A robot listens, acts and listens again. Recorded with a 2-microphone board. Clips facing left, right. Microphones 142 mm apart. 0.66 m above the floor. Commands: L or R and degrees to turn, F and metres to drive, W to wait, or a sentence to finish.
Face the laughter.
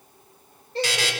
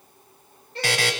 L35
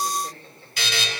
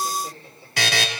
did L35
W
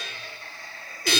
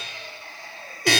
R25
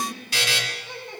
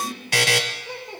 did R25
R25
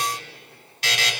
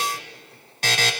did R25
W
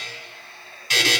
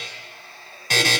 R10
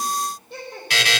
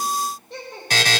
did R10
Facing the laughter, 2 to 4 m away.